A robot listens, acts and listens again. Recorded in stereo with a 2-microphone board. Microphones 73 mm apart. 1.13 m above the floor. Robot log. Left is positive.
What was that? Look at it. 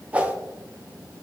note: The whoosh: about 20° right or 160° right.
cmd yaw -20
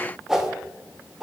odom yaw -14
end: Found it: a whoosh, straight ahead, under 1 m away.